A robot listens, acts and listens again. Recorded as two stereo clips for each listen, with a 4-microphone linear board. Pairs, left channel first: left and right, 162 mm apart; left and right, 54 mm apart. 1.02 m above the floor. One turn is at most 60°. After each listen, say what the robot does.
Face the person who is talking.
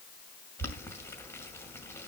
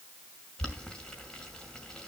Keep listening.
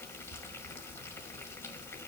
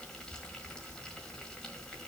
Keep listening.
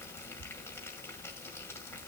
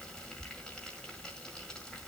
I can't make out anyone speaking to turn to.